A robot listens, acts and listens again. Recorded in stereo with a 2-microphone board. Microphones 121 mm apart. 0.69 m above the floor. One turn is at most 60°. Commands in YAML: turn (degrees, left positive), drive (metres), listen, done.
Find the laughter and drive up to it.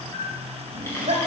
turn: -60
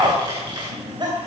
turn: -40
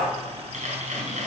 listen: true
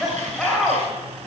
drive: 1.0
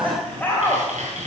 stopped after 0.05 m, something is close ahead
turn: 15
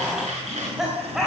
done: "Something is in my way. I am facing the laughter but have not reached it."